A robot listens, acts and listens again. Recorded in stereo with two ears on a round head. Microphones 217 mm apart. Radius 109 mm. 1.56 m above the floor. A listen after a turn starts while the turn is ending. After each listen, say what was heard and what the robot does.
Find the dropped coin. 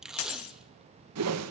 The dropped coin: about 60° left or 120° left. Turn 60° left.
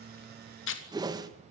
Keep listening.
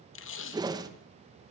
I heard a dropped coin, but can't make it out now. It was about straight ahead or 60° left.